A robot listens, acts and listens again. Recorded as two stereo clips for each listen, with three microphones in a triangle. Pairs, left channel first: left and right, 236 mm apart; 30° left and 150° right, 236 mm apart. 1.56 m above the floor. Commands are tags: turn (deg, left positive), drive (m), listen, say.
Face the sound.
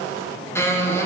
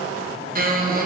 <turn deg="170"/>
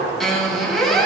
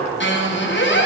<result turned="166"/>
<say>Facing the squeak.</say>